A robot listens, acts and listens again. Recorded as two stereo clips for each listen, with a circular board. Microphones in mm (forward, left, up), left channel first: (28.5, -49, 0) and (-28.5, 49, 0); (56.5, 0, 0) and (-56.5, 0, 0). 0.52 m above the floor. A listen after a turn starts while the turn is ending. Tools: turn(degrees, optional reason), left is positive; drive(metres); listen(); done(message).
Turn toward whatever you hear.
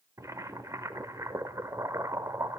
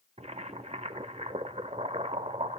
turn(degrees=180, reason="The boiling: straight behind.")
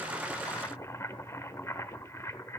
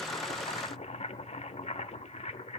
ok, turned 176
done("Found it: boiling, straight ahead, under 1 m away.")